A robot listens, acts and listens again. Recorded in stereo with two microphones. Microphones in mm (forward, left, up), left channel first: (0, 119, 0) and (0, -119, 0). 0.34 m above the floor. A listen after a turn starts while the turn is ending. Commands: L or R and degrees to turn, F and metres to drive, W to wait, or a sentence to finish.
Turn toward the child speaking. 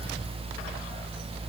W
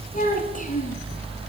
L35
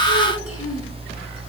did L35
W
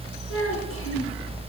L115
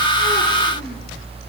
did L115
W
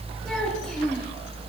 Found it: a child speaking, straight ahead, over 4 m away.